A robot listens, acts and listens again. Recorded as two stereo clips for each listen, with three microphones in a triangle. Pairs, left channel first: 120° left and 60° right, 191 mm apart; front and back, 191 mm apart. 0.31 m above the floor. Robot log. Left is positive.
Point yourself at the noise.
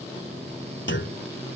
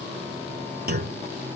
note: The clunk: 140° left.
cmd yaw +140
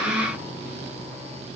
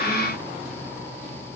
end: Facing where the clunk came from. I can't hear it now.